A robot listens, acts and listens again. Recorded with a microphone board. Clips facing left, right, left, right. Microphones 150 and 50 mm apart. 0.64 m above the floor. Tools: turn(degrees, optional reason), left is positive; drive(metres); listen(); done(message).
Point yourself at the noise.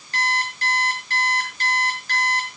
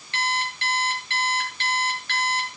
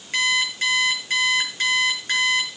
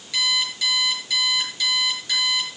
turn(degrees=40, reason="The alarm clock: about 40° left or 140° left.")
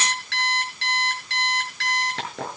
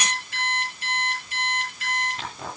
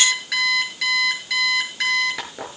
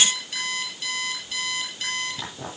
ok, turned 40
turn(degrees=100, reason="So it is at 100° left.")
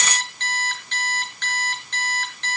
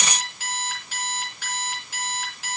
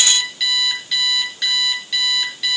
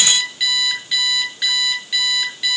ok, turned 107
done("Facing the alarm clock.")